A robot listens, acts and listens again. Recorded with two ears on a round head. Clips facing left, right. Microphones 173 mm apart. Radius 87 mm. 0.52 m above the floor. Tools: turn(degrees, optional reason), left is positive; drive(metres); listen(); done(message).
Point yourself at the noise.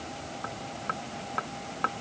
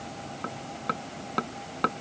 turn(degrees=-50, reason="The hammering: about 50° right or 130° right.")
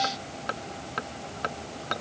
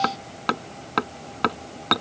turn(degrees=-80, reason="So it is at 80° right.")
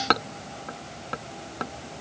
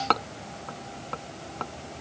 turn(degrees=15, reason="The hammering is now 15° left.")
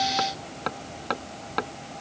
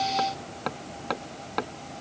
done("Found it: hammering, straight ahead.")